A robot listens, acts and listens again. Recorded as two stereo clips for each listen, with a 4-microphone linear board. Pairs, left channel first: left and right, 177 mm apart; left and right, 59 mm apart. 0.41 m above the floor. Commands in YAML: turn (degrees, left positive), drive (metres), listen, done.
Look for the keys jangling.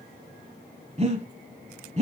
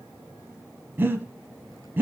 listen: true
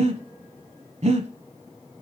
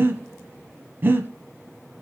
listen: true
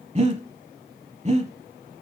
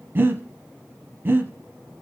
done: "I can't make out keys jangling, only breathing."